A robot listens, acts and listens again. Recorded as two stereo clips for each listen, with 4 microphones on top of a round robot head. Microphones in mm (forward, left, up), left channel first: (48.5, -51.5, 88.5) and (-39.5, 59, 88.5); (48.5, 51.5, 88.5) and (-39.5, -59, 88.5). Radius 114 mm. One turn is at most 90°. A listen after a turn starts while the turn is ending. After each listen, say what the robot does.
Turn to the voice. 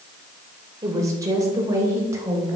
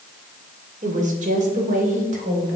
Turn 90° right.
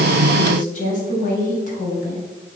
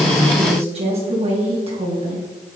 Turn 80° right.
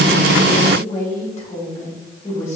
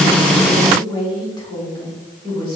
Turn 10° right.
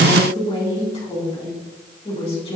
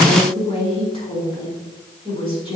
Found it: a woman speaking, straight ahead, over 4 m away.